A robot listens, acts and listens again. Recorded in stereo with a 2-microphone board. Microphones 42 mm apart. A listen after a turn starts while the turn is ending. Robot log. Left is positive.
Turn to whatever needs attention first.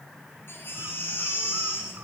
note: The baby crying: about 65° left or 115° left.
cmd yaw +65
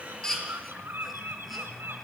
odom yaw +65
cmd idle
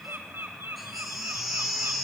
end: Facing the baby crying, over 4 m away.